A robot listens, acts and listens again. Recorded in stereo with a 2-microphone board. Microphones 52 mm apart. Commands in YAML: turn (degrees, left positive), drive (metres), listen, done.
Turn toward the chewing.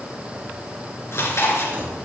turn: 60
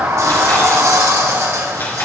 listen: true
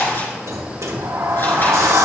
turn: 50
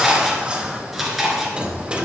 done: "Facing the chewing."